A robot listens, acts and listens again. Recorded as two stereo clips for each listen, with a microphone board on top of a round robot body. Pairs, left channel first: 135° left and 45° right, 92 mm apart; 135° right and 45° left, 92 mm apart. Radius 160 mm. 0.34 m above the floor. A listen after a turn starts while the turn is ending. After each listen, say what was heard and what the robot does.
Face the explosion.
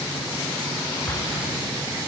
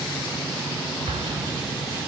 The explosion: 65° left. Turn 65° left.
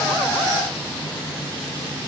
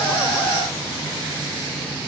Facing where the explosion came from. I can't hear it now.